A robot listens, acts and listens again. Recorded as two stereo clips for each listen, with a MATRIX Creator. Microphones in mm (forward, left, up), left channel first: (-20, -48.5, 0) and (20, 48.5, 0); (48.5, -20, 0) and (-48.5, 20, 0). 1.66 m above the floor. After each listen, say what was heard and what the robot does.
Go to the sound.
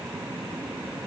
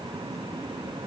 Keep listening.
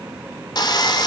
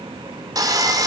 The sawing: 155° right. Turn 155° right.
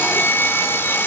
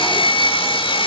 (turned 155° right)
The sawing is now 45° right. Turn 45° right.
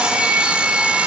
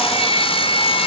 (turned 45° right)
The sawing is now 10° right. Turn 10° right.
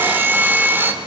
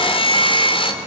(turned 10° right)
Drive 1.0 m forward.
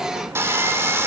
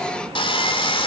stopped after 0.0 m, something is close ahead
Blocked. The sawing is further on, straight ahead.